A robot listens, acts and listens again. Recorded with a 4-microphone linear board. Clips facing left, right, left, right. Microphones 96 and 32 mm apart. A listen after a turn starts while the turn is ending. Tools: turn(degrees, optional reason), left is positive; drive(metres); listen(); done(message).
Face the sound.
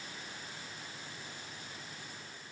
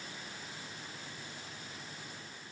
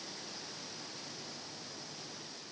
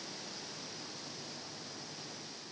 listen()
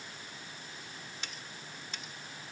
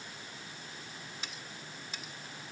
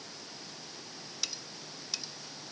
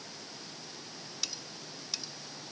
turn(degrees=-30)
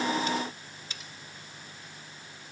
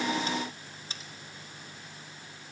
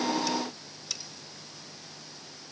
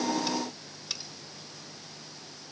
turn(degrees=-145, reason="So it is at 145° right.")
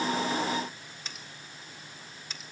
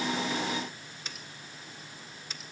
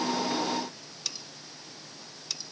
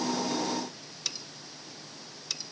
done("Facing the cutlery clinking, 1 to 2 m away.")